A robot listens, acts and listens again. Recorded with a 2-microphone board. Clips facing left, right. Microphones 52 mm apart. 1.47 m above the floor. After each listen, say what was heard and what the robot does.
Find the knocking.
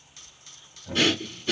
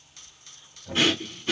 Turn 30° left.
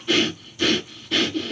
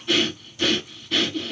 Keep listening.
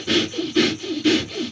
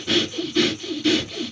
Keep listening.
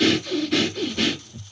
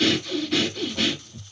I heard knocking, but can't make it out now. It was about 30° right or 150° left.